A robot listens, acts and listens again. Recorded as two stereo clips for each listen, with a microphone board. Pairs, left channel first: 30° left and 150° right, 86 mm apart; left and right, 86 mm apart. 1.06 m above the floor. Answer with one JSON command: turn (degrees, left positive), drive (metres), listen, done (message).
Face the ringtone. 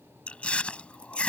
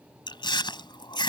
{"listen": true}
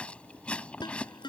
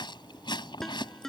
{"done": "Facing the ringtone."}